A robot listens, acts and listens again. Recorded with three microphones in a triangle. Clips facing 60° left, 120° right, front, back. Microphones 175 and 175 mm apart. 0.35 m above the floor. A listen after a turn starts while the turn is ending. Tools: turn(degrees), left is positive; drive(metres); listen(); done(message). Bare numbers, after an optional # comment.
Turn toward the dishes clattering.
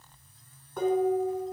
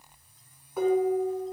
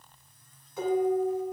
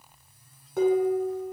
# The dishes clattering: 155° left.
turn(155)
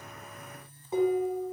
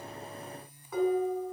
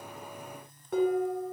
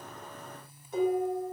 done("Facing the dishes clattering, 2 to 4 m away.")